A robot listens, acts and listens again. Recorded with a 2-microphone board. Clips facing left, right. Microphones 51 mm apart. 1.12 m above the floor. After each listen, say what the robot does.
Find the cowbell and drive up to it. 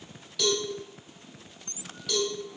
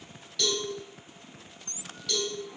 Turn 30° left.
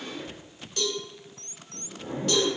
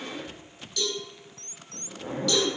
Turn 145° left.
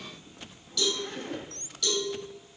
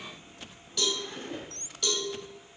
Turn 25° right.
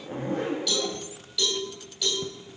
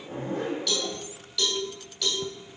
Turn 10° left.
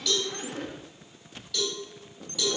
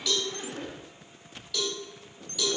Drive 1.0 m forward.
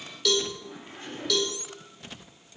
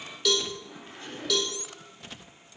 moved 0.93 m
Drive 1.0 m forward.
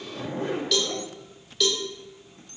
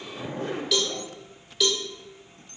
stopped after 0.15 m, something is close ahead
I am next to the cowbell.